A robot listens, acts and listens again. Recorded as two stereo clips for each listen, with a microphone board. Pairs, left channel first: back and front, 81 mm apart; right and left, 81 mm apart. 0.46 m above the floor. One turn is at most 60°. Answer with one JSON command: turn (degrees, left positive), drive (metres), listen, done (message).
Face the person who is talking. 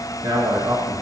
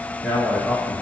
{"turn": -20}
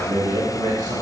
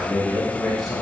{"done": "Facing the man speaking."}